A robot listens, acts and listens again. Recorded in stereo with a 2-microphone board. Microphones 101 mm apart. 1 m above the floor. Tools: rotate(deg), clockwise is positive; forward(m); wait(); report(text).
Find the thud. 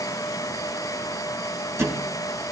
rotate(25)
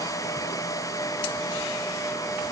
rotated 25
wait()
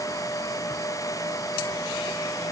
report("I heard a thud, but can't make it out now. It was about straight ahead or 130° right.")